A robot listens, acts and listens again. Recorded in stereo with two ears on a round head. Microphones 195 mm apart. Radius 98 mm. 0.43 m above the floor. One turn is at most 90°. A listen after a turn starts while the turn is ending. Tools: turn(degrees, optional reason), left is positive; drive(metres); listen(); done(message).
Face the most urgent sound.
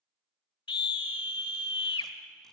turn(degrees=25, reason="The scream: about 25° left or 155° left.")
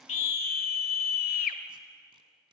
turn(degrees=90, reason="So it is at 125° left.")
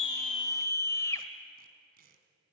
turn(degrees=15, reason="The scream is now 15° left.")
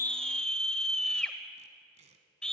done("Facing the scream, 1 to 2 m away.")